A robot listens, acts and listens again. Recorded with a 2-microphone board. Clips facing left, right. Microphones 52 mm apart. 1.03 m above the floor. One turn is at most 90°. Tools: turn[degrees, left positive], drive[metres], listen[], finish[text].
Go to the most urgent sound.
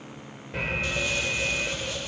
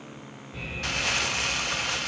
Thought: The alarm: about 65° left or 115° left.
Action: turn[65]
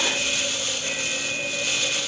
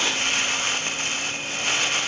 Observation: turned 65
Thought: So it is at 50° left.
Action: turn[50]
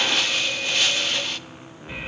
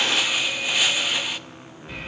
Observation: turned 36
Thought: The alarm is now 15° left.
Action: turn[15]
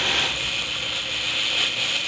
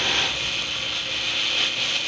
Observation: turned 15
Action: drive[1.0]
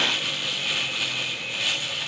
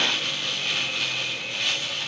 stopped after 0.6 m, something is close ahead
Action: listen[]
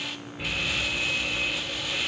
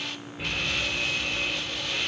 Action: finish[Blocked. The alarm is further on, straight ahead.]